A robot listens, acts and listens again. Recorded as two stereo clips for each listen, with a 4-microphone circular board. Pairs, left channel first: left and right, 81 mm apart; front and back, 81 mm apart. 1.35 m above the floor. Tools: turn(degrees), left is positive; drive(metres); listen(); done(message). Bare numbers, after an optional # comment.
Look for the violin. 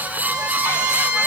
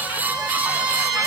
# The violin: 155° right.
turn(-155)
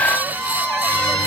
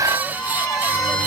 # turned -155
# The violin is now 35° right.
turn(-35)
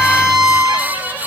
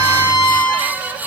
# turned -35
# The violin is now 10° right.
turn(-10)
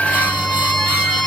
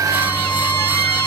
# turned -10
done("Found it: a violin, straight ahead.")